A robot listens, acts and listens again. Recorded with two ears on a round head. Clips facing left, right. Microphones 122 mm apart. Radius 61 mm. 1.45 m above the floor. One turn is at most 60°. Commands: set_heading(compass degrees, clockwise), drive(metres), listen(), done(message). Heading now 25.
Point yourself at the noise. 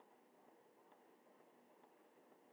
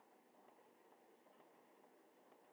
listen()
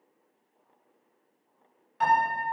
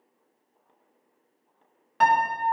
set_heading(85)
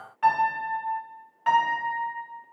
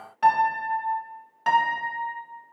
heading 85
set_heading(130)
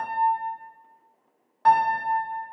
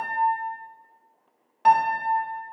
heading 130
set_heading(150)
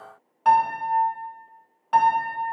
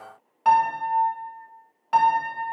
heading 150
done("Found it: a piano, straight ahead, 1 to 2 m away.")